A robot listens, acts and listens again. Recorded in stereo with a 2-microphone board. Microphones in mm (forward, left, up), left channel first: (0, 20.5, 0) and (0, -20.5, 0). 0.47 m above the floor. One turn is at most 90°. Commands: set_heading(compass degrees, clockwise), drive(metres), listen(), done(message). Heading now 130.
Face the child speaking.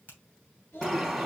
set_heading(60)
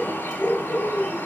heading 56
listen()
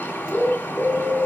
listen()
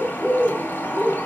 done("I heard a child speaking, but can't make it out now. It was about 5° right or 35° left.")